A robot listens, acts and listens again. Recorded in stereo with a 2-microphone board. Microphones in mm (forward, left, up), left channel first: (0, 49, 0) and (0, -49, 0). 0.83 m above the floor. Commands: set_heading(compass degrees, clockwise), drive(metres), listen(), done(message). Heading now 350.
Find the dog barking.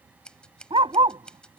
set_heading(50)
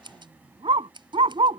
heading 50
set_heading(125)
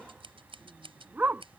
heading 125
set_heading(145)
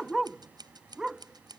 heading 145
done("Found it: a dog barking, straight ahead.")